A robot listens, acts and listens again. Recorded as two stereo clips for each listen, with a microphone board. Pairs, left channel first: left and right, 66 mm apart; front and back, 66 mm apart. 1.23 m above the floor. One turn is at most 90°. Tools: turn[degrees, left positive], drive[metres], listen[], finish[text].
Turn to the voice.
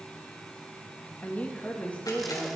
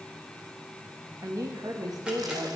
Thought: The woman speaking: 160° left.
Action: turn[90]
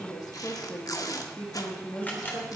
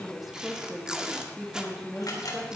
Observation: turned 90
Thought: The woman speaking is now 105° left.
Action: turn[90]
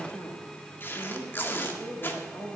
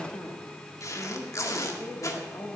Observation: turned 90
Thought: The woman speaking is now 45° left.
Action: turn[45]
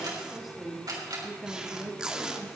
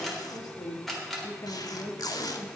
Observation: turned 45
Action: finish[Found it: a woman speaking, straight ahead.]